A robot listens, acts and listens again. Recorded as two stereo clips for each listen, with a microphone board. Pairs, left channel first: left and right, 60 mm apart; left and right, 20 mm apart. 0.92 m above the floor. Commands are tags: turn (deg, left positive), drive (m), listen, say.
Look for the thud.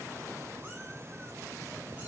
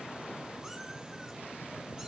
<listen/>
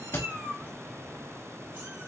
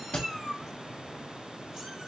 <turn deg="40"/>
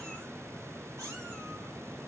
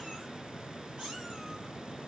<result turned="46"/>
<listen/>
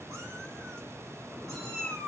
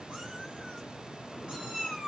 <say>I heard a thud, but can't make it out now. It was about 5° right or 95° left.</say>